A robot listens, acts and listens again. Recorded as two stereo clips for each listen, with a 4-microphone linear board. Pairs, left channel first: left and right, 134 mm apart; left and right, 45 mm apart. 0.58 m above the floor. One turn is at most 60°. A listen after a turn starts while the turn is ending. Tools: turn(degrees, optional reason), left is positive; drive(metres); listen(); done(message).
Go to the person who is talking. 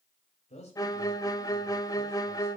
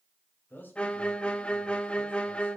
turn(degrees=55, reason="The man speaking: about 55° left or 125° left.")
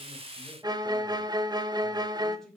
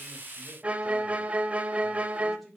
drive(metres=1.0)
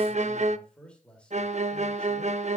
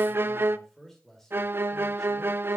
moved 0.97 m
turn(degrees=10, reason="The man speaking is now 10° left.")
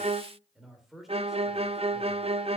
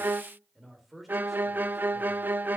drive(metres=1.0)
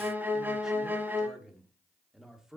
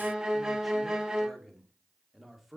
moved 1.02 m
drive(metres=1.0)
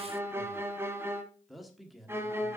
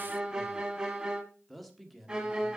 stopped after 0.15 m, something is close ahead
done("Arrived at the man speaking, straight ahead.")